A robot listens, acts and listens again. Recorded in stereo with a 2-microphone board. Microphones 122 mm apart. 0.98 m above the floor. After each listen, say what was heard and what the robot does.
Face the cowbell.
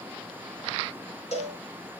The cowbell: about 65° left or 115° left. Turn 65° left.
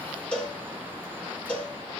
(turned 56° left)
So it is at 10° left. Turn 10° left.
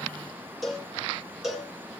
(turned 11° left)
Found it: a cowbell, straight ahead.